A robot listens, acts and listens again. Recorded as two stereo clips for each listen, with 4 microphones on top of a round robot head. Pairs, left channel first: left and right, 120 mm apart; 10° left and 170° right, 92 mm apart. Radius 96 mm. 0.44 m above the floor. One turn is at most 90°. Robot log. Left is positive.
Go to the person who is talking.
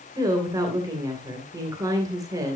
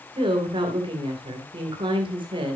note: The woman speaking: 150° right.
cmd yaw -90
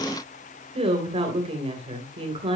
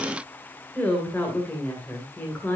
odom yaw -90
note: The woman speaking is now 60° right.
cmd yaw -60
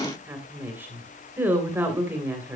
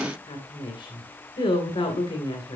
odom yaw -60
note: The woman speaking is now 20° right.
cmd yaw -20
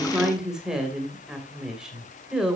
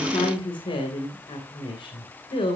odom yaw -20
cmd fwd 1.0
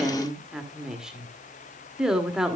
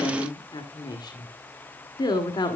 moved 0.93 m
cmd fwd 1.0
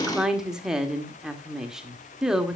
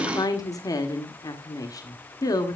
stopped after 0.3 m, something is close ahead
end: I am next to the woman speaking.